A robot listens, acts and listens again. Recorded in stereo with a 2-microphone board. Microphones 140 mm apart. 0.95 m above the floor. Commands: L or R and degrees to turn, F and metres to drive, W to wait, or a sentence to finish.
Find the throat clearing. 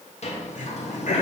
L65
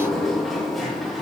W
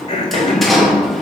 L45
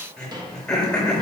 Found it: throat clearing, straight ahead.